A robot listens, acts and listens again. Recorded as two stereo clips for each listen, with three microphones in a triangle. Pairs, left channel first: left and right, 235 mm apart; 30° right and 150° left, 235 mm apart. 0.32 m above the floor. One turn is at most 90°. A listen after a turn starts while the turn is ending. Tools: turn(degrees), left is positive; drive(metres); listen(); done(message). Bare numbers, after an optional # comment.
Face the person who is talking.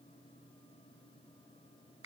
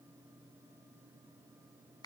listen()
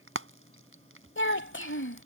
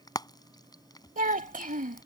# The child speaking: 105° left.
turn(90)
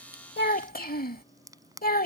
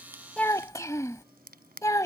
# The child speaking is now 45° left.
turn(45)
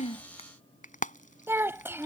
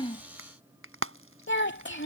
# The child speaking is now 10° right.
turn(-10)
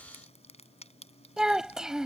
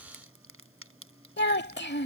done("Found it: a child speaking, straight ahead.")